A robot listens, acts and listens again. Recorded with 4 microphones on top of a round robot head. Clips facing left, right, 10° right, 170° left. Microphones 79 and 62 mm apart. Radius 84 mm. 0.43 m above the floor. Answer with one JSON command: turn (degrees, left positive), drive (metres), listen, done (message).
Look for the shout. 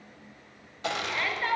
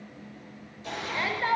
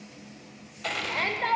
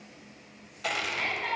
{"turn": -20}
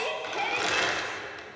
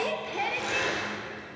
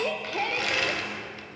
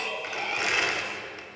{"done": "Found it: a shout, straight ahead."}